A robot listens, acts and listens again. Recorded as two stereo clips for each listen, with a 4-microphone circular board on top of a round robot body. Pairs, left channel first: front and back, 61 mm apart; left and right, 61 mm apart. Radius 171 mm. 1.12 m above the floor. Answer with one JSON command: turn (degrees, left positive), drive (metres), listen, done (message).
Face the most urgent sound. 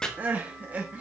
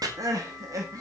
{"turn": -115}
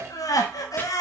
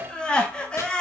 {"turn": 15}
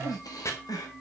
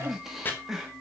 {"done": "Facing the crying, 1 to 2 m away."}